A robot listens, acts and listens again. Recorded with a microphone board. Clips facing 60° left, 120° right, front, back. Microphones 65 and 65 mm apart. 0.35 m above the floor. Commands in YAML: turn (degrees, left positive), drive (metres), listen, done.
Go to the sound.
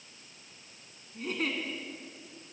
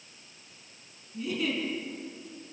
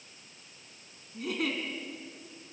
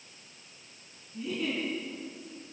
turn: 20
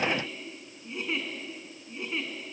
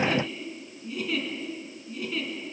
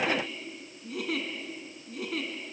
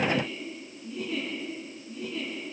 drive: 1.0
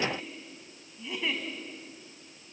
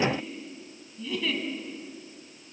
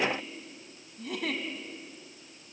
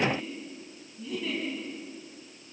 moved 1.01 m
drive: 1.0
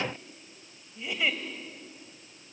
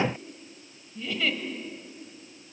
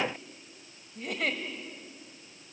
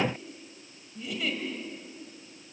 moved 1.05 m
turn: -10
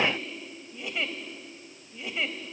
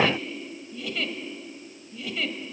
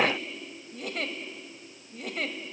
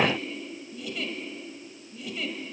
drive: 1.0
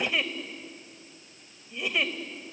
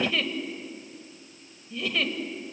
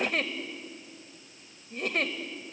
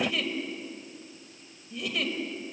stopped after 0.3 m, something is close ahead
done: "I am next to the giggle."